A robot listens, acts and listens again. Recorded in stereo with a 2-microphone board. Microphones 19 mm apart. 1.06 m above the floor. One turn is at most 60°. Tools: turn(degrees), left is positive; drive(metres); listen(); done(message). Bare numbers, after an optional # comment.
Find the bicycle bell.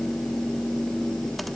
listen()
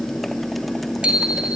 turn(-60)
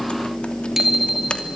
# So it is at 15° right.
turn(-15)
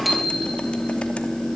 listen()
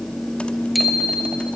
done("Found it: a bicycle bell, straight ahead.")